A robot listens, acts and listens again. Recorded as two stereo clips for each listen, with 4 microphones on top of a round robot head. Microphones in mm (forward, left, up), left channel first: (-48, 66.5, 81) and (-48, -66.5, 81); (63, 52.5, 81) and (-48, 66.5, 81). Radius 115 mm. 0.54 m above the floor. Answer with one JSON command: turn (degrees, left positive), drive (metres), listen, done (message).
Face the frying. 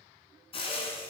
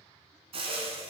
{"turn": 140}
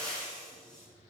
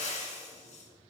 {"done": "Found it: frying, straight ahead."}